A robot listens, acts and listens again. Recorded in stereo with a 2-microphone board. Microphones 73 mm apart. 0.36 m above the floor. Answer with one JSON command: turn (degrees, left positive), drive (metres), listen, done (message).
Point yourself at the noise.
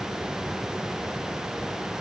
{"listen": true}
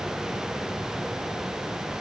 {"listen": true}
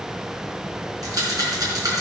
{"turn": -50}
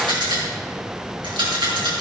{"turn": -80}
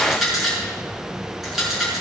{"done": "Facing the rattle."}